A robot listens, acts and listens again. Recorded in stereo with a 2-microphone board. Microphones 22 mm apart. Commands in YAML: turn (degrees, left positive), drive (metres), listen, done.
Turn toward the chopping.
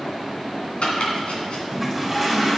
turn: 70
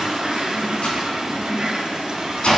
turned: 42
turn: 70
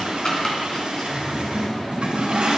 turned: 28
turn: 40
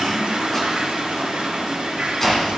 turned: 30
turn: 15
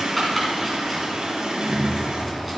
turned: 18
done: "Found it: chopping, straight ahead, 2 to 4 m away."